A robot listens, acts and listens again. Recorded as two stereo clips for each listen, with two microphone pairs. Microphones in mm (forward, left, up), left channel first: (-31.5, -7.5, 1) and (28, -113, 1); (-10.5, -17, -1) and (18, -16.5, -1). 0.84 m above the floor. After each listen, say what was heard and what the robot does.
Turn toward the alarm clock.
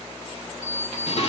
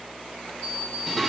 The alarm clock: 145° left. Turn 145° left.
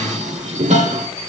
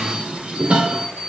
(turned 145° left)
Found it: an alarm clock, straight ahead.